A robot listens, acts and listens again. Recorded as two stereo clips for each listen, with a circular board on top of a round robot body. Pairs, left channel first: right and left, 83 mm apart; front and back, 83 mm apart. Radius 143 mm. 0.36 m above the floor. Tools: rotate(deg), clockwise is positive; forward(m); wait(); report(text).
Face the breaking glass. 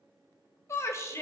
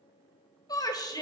wait()
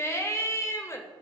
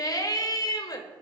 wait()
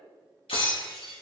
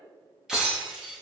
rotate(95)
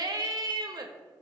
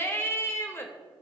report("Facing where the breaking glass came from. I can't hear it now.")